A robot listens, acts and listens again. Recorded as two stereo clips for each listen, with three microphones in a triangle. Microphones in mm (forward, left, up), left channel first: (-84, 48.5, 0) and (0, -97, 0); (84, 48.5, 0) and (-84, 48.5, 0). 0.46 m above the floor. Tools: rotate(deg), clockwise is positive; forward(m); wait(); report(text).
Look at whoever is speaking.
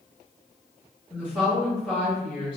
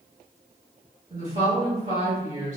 rotate(160)
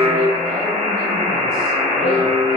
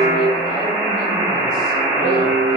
wait()
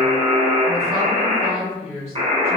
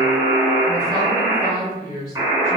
rotate(-10)
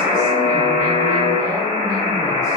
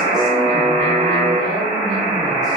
wait()
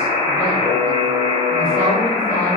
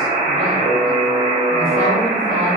wait()
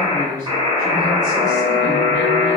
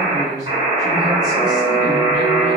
report("Facing the woman speaking, 1 to 2 m away.")